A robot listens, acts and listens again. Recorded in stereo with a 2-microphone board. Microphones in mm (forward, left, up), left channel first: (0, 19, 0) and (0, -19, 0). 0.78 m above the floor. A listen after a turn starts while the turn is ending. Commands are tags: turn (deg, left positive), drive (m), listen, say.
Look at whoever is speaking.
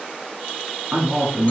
<turn deg="-65"/>
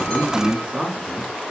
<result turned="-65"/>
<turn deg="-10"/>
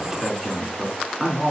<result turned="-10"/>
<say>Found it: a man speaking, straight ahead, 1 to 2 m away.</say>